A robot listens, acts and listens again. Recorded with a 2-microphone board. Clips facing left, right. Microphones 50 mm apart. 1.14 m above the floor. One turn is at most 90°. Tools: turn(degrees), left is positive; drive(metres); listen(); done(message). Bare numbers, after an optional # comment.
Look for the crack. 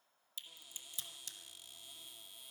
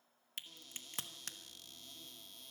# The crack: about 60° right or 120° right.
turn(-60)
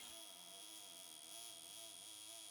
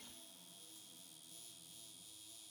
listen()
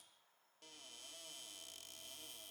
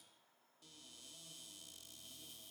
done("I heard a crack, but can't make it out now. It was about straight ahead or 60° right.")